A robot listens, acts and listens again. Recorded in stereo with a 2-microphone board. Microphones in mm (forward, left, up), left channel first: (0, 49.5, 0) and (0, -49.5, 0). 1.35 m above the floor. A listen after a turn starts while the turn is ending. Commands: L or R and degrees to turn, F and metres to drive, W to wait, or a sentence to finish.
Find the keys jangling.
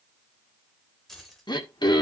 L30
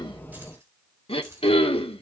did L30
R25
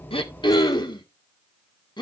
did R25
W
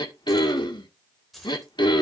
Facing the keys jangling, 2 to 4 m away.